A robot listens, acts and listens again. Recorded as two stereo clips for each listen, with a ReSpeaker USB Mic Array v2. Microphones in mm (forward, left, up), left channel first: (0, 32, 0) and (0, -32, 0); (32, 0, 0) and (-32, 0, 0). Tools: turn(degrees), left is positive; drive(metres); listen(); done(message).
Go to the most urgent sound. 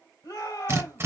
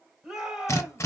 turn(degrees=100)
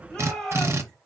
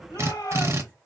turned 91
turn(degrees=10)
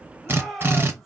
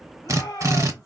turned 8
drive(metres=1.0)
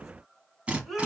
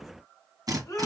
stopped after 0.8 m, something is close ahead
done("Arrived at the shout, straight ahead.")